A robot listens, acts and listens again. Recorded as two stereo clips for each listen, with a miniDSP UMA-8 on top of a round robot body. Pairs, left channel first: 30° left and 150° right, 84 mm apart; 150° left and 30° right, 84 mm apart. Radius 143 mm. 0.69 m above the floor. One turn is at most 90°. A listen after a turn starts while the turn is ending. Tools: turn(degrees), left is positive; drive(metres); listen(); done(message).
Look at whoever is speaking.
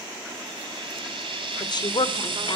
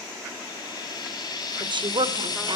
done("Found it: a woman speaking, straight ahead.")